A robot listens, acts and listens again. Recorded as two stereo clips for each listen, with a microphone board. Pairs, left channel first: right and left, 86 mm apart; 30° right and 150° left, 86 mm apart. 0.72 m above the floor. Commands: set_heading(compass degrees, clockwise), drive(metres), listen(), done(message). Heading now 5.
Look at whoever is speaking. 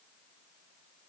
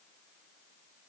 listen()
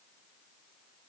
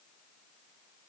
listen()
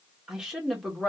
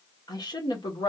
done("Found it: a woman speaking, straight ahead, 1 to 2 m away.")